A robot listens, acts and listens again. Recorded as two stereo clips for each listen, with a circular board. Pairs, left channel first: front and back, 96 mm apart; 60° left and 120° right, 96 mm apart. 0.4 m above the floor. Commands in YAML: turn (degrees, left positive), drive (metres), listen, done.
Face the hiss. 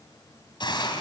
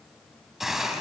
turn: -35
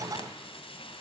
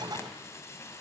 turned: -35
done: "Facing the hiss, 2 to 4 m away."